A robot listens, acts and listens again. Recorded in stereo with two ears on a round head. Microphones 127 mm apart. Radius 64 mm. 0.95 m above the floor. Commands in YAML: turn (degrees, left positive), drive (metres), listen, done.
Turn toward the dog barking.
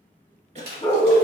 turn: 15
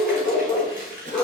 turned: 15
turn: 30
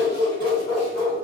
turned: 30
turn: 20
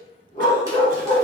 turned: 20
turn: 150
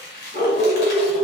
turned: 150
turn: 40
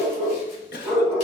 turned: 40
turn: 10
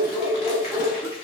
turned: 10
done: "Found it: a dog barking, straight ahead."